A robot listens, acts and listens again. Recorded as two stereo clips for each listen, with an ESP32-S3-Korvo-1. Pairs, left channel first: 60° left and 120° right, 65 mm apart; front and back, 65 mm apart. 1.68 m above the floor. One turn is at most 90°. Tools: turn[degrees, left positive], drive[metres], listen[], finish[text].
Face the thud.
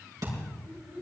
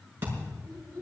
Thought: The thud: 125° right.
Action: turn[-90]
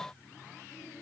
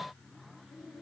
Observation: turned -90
Thought: Nothing new. It was at 35° right.
Action: turn[-35]
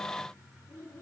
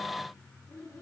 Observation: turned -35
Action: finish[Facing where the thud came from. I can't hear it now.]